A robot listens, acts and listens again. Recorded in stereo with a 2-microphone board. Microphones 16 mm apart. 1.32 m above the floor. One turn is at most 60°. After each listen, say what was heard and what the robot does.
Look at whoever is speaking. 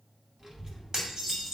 The child speaking: about 50° right or 130° right. Turn 50° right.
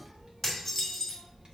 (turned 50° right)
So it is at 55° right. Turn 55° right.
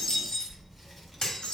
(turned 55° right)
Found it: a child speaking, straight ahead.